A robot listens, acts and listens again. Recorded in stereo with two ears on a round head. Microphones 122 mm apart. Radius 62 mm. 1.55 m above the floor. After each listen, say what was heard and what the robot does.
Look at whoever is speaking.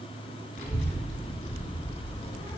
The child speaking: about 40° left or 140° left. Turn 40° left.
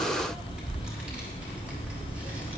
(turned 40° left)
So it is at 10° right. Turn 10° right.
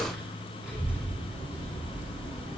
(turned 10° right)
The child speaking is now 10° right. Turn 10° right.
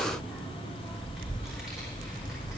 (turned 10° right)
Found it: a child speaking, straight ahead.